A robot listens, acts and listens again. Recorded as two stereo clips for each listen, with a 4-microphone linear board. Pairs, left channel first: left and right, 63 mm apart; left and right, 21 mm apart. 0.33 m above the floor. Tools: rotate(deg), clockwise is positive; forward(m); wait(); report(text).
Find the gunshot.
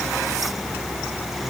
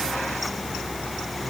wait()
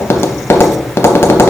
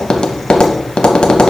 wait()
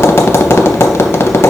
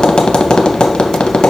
report("I can't make out a gunshot to turn to.")